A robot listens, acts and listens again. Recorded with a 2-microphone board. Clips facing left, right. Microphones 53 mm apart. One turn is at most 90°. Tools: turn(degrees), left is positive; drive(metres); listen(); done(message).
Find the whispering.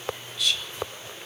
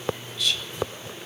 turn(degrees=30)
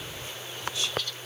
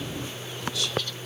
turn(degrees=90)
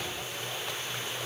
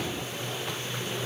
turn(degrees=55)
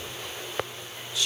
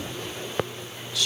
turn(degrees=25)
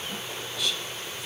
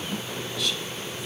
listen()
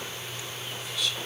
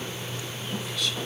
done("Found it: whispering, straight ahead, 1 to 2 m away.")